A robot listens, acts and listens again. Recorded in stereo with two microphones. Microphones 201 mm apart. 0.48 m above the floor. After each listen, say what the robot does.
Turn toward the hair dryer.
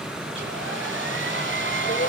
Turn 90° right.
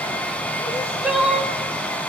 Facing the hair dryer.